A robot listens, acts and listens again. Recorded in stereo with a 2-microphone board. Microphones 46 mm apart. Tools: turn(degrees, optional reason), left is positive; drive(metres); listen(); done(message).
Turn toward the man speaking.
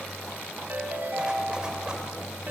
listen()
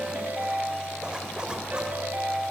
listen()
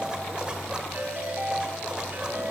done("I can't make out a man speaking to turn to.")